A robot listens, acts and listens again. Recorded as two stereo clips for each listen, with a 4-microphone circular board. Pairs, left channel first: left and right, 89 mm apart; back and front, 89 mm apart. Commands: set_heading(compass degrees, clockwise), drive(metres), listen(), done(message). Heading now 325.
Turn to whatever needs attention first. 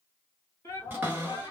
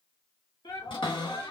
set_heading(170)
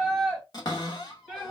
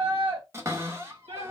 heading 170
done("Found it: a shout, straight ahead, 2 to 4 m away.")